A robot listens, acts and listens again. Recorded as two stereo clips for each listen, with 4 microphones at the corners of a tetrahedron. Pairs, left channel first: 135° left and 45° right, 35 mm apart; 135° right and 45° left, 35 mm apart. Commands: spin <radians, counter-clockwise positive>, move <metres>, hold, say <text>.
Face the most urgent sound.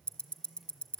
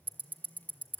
hold
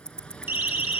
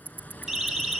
spin -0.61
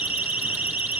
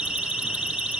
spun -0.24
spin -0.35
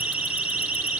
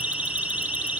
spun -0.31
say Found it: a siren, straight ahead.